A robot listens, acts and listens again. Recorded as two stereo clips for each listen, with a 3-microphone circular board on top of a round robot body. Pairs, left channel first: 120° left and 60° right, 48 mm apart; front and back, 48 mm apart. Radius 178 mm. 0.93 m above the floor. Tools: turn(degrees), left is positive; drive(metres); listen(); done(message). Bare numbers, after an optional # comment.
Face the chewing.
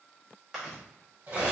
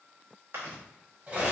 # The chewing: 150° right.
turn(-150)
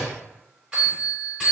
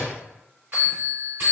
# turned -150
listen()
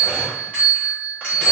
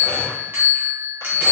listen()
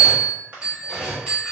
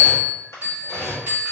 done("Found it: chewing, straight ahead.")